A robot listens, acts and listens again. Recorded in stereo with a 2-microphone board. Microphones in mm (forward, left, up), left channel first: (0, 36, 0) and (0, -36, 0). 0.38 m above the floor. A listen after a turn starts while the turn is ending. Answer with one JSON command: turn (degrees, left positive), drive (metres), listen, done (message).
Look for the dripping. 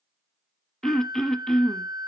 {"listen": true}
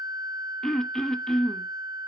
{"listen": true}
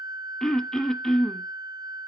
{"done": "I can't make out dripping to turn to."}